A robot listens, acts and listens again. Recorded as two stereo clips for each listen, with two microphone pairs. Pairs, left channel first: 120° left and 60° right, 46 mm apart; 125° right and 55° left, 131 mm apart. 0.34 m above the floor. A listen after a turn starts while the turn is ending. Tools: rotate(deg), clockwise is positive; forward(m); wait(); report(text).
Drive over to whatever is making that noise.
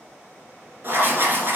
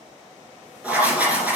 rotate(25)
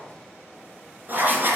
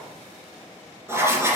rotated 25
rotate(15)
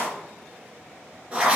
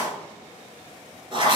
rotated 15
forward(1.0)
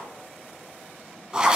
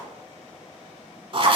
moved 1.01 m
rotate(-10)
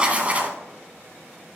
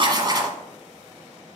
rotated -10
forward(1.0)
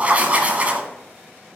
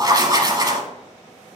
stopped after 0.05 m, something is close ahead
report("Arrived at the writing, straight ahead.")